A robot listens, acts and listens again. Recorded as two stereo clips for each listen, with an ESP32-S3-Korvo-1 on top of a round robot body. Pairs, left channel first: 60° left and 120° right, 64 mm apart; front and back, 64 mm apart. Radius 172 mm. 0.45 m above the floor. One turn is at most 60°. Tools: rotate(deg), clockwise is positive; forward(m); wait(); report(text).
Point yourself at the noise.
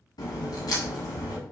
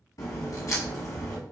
rotate(-40)
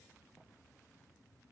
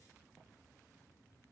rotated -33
rotate(-10)
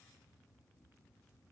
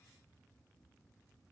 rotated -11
report("I heard a crack from this way, but can't make it out now.")